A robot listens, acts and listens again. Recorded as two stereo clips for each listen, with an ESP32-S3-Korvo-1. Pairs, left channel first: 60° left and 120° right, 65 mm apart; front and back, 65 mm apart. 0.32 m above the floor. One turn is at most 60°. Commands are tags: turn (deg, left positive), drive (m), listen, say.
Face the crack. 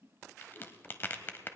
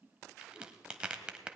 <turn deg="60"/>
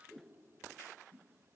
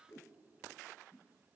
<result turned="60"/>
<turn deg="50"/>
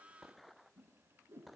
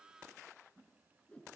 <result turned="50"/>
<say>I heard a crack from this way, but can't make it out now.</say>